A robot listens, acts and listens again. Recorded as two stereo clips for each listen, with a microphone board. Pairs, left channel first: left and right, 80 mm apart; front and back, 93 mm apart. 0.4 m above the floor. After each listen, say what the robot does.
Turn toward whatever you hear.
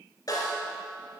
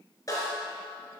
Turn 50° left.
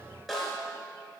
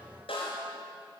Facing the snare drum.